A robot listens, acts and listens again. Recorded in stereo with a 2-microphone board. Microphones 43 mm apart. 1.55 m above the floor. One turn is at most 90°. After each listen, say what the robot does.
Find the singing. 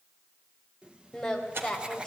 Turn 15° left.
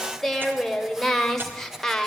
Turn 30° left.
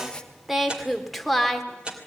Turn 30° left.
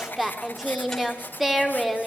Found it: singing, straight ahead.